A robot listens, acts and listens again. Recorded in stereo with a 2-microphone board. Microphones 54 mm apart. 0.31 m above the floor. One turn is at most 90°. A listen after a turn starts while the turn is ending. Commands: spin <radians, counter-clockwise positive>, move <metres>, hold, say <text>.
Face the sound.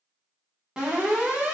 spin -0.52
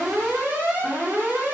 spin -1.57
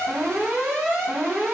spin -0.44
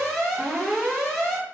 say Found it: an alarm, straight ahead, 1 to 2 m away.